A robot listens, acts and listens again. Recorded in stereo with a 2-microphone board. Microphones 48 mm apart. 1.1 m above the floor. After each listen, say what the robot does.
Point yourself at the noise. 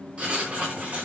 Turn 30° right.
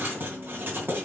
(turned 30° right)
Turn 125° right.
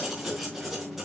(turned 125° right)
Found it: writing, straight ahead, 2 to 4 m away.